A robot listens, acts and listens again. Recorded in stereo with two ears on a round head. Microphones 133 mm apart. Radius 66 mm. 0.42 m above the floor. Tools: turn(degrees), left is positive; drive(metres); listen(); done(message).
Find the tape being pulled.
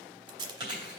turn(degrees=-30)
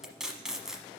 done("Facing the tape being pulled.")